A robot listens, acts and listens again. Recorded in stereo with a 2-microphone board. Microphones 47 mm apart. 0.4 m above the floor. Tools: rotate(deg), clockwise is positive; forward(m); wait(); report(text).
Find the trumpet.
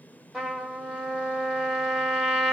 rotate(30)
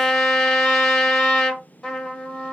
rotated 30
rotate(-15)
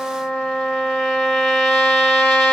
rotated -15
report("Found it: a trumpet, straight ahead, under 1 m away.")